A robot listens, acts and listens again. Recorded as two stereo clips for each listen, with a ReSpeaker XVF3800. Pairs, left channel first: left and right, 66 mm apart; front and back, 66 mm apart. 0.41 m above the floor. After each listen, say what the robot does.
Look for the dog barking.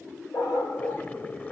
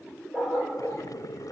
Turn 105° left.
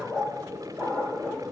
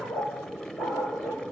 Turn 20° left.
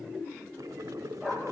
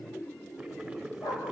Facing the dog barking, over 4 m away.